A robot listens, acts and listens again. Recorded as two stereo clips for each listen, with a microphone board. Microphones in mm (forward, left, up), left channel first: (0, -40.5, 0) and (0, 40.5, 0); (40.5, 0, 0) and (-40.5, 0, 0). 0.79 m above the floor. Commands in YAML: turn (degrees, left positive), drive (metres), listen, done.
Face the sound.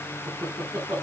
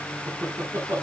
turn: 120
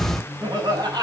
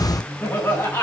turn: 55
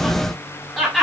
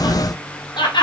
done: "Found it: laughter, straight ahead, over 4 m away."